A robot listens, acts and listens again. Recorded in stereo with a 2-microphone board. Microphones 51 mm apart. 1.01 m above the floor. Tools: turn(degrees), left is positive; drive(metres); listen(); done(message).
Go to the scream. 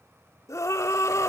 turn(degrees=90)
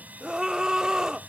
turn(degrees=-10)
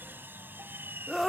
drive(metres=1.0)
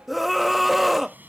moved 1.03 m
drive(metres=1.0)
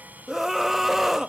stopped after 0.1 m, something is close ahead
done("I am next to the scream.")